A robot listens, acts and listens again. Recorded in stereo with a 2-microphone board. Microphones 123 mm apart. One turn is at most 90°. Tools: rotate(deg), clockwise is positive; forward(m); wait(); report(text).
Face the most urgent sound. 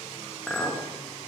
wait()
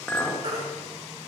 rotate(55)
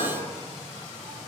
wait()
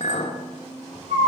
rotate(75)
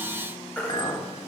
rotate(-10)
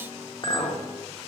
wait()
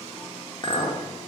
wait()
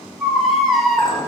report("Found it: a baby crying, straight ahead, 2 to 4 m away.")